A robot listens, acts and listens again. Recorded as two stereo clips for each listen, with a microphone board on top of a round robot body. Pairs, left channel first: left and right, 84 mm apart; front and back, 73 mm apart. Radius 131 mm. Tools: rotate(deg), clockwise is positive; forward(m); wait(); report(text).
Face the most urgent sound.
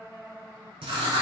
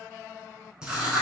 wait()
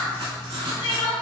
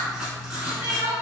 rotate(-105)
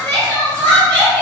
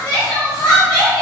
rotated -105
rotate(-15)
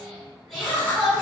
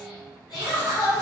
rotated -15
report("Found it: crying, straight ahead, 2 to 4 m away.")